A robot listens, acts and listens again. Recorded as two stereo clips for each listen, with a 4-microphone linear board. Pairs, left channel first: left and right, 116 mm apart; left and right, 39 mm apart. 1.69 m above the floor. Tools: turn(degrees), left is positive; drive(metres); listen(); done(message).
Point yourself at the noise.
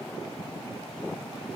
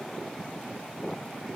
listen()
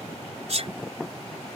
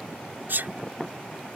turn(degrees=-65)
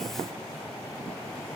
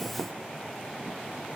listen()
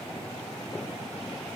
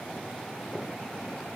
done("I heard a sneeze, but can't make it out now. It was about straight ahead or 50° right.")